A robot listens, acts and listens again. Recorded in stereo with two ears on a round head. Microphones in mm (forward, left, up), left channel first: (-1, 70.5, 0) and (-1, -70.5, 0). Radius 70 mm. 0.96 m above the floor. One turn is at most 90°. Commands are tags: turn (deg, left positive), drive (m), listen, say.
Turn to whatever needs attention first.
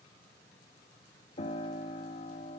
<listen/>
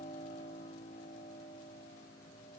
<listen/>
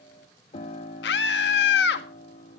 <turn deg="70"/>
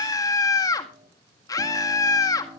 <turn deg="20"/>
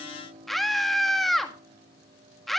<say>Facing the scream, 1 to 2 m away.</say>